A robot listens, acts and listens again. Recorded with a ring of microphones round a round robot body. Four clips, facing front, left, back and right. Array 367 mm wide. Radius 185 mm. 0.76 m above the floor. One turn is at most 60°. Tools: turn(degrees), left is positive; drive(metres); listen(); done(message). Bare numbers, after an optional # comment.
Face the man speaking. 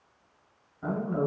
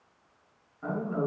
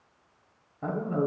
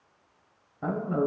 # The man speaking: 130° right.
turn(-60)
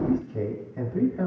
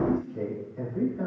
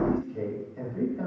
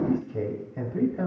# The man speaking is now 70° right.
turn(-60)
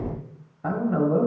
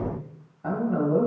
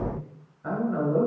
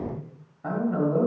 done("Found it: a man speaking, straight ahead.")